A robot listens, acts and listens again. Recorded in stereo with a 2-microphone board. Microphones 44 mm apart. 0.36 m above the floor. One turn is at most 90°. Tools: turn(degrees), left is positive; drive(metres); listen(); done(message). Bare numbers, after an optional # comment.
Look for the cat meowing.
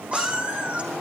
# The cat meowing: about 25° right or 155° right.
turn(-25)
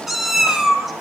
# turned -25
done("Found it: a cat meowing, straight ahead, 2 to 4 m away.")